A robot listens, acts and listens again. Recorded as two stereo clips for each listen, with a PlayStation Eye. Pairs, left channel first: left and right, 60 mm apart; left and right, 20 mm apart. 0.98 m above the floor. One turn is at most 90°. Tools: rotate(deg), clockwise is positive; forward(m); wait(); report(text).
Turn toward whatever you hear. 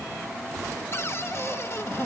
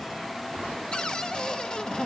rotate(-50)
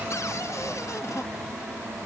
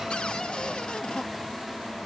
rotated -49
rotate(-70)
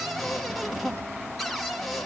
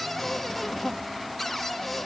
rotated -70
report("Found it: a cupboard door, straight ahead.")